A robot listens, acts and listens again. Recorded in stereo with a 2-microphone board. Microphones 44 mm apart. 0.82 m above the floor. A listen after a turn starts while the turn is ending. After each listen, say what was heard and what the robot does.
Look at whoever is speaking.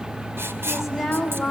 Turn 30° left.
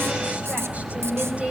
So it is at 30° right. Turn 30° right.
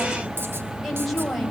Facing the woman speaking.